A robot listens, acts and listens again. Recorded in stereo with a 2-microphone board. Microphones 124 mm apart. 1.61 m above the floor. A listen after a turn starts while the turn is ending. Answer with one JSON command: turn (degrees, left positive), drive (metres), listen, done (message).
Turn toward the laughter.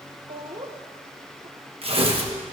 {"turn": -55}
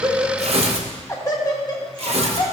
{"turn": 35}
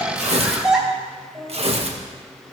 {"done": "Facing the laughter, 2 to 4 m away."}